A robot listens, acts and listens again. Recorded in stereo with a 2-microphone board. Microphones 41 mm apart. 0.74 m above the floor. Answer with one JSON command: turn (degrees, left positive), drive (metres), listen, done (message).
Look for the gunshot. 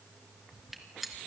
{"turn": 30}
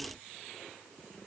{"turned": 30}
{"listen": true}
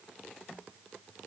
{"done": "I heard a gunshot, but can't make it out now. It was about 30° right or 150° left."}